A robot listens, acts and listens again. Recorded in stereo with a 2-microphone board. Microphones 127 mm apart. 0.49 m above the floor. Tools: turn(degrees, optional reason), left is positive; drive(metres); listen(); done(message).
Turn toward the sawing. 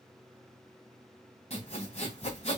turn(degrees=55, reason="The sawing: about 55° left or 125° left.")
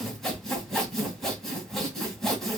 done("Facing the sawing, 1 to 2 m away.")